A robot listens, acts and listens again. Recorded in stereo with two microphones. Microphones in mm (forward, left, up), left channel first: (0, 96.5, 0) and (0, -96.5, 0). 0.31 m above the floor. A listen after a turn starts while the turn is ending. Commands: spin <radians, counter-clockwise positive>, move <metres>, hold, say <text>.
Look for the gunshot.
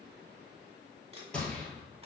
spin 0.52
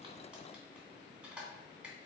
hold
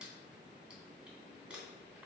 say I heard a gunshot, but can't make it out now. It was about 25° right or 145° left.